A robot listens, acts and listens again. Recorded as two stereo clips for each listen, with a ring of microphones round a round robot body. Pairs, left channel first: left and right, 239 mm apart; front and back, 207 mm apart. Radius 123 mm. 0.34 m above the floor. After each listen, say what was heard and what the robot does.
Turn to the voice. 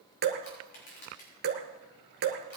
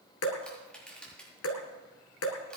Keep listening.
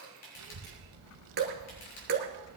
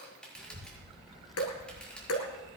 The child speaking: 90° right. Turn 90° right.
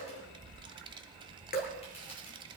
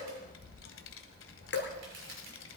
The child speaking is now 20° right. Turn 20° right.
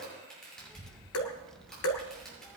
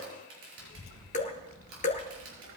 Found it: a child speaking, straight ahead.